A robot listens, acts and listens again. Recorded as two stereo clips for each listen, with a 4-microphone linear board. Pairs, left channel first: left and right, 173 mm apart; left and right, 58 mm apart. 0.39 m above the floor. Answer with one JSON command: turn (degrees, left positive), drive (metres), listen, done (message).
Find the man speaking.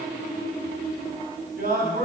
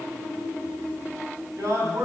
{"turn": -55}
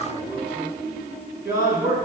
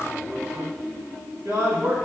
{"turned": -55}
{"turn": -65}
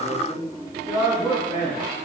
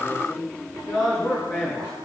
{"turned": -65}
{"turn": -10}
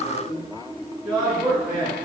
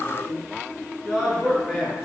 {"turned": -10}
{"done": "Facing the man speaking, over 4 m away."}